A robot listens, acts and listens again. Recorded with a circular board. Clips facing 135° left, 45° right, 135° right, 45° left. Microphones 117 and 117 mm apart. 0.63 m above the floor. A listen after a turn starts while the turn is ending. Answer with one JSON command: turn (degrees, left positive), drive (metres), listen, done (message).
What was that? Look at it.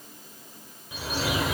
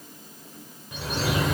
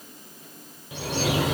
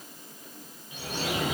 {"turn": -140}
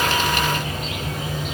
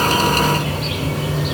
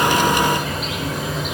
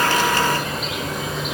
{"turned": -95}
{"turn": -45}
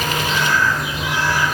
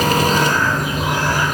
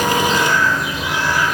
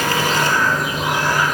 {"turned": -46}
{"done": "Facing the bird."}